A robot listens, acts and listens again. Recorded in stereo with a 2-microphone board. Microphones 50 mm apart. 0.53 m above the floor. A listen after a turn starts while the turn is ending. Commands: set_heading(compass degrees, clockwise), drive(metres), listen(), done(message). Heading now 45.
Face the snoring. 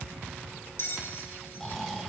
set_heading(15)
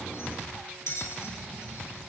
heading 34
listen()
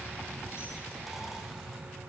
listen()
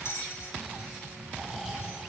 set_heading(44)
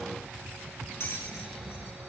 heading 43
listen()
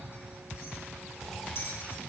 listen()
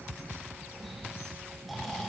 done("Facing the snoring.")